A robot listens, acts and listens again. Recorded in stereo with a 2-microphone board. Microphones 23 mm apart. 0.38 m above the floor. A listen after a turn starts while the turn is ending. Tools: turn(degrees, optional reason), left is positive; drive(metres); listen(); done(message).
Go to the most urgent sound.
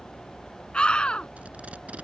turn(degrees=40, reason="The scream: about 40° left or 140° left.")
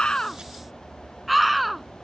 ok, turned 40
drive(metres=1.0)
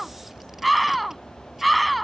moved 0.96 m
drive(metres=1.0)
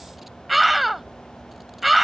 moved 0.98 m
drive(metres=1.0)
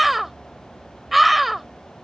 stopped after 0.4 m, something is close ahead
done("Arrived at the scream, straight ahead.")